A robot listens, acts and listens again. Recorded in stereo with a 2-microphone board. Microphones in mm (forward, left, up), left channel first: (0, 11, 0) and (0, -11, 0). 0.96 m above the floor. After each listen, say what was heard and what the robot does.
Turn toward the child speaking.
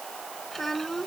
Turn 30° left.
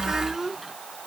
So it is at 20° right. Turn 20° right.
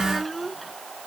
Found it: a child speaking, straight ahead.